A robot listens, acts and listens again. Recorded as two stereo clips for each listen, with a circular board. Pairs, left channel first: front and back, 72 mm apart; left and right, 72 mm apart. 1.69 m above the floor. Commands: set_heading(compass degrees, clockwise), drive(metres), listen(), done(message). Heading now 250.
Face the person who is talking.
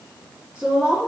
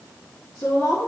set_heading(140)
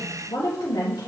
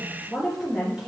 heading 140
done("Facing the woman speaking, 1 to 2 m away.")